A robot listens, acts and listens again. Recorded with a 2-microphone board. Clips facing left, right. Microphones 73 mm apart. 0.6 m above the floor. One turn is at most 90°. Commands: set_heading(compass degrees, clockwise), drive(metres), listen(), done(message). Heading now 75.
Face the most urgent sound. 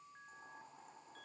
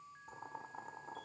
listen()
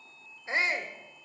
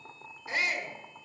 set_heading(45)
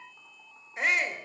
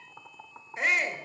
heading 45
done("Facing the shout.")